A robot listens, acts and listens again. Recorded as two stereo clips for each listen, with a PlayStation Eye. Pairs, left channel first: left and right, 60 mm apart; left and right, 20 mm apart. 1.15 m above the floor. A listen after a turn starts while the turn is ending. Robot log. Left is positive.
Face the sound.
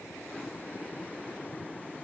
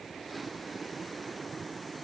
cmd idle
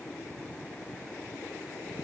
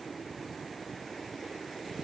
cmd idle
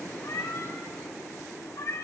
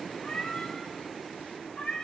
cmd yaw +90
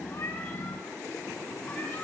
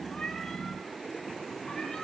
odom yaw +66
note: Nothing new. It was at 25° left.
cmd yaw +25
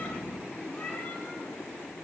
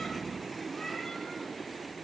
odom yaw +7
note: Nothing new. It was at 15° left.
cmd yaw +15
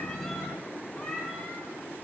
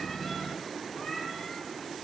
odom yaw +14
end: I heard a cat meowing from this way, but can't make it out now.